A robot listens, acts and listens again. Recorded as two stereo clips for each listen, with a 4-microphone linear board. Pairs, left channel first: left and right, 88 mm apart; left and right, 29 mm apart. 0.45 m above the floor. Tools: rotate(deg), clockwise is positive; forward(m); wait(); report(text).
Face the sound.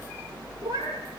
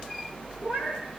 rotate(35)
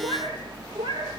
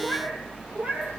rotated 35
rotate(115)
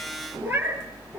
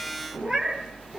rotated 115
rotate(25)
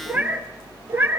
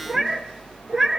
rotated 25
rotate(25)
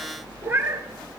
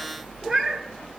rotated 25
rotate(25)
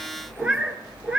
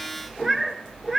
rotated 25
rotate(10)
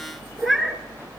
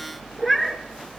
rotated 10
report("Facing the cat meowing.")